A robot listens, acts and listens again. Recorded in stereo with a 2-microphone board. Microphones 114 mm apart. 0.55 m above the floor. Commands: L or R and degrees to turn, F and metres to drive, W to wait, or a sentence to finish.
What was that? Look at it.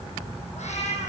L75
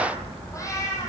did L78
L25
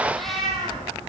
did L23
Found it: a cat meowing, straight ahead, over 4 m away.